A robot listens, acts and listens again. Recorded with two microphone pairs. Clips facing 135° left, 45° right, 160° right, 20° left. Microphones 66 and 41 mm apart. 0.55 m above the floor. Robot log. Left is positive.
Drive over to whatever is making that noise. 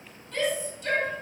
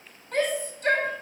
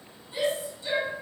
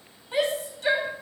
cmd fwd 1.0
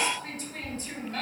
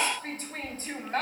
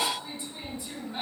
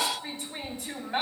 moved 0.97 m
cmd fwd 1.0
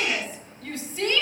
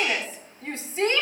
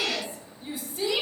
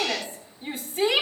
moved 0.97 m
note: The shout is now 10° left.
cmd yaw +10
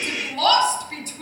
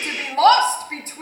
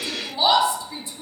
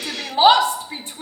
cmd fwd 1.0
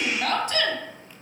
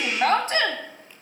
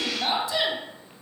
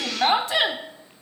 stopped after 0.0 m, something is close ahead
end: Arrived at the shout, straight ahead.